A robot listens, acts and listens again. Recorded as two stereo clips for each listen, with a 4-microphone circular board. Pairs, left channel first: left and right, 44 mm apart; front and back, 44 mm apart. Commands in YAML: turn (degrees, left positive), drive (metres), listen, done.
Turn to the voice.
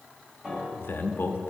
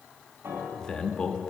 turn: 70
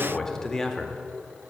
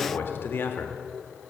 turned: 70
turn: 10
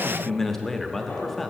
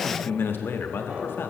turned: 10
done: "Found it: a man speaking, straight ahead."